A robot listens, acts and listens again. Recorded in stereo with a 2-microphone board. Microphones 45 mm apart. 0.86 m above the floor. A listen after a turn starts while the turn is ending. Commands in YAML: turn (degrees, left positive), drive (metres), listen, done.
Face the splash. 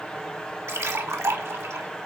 turn: -90
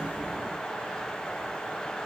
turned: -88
done: "I heard a splash from this way, but can't make it out now."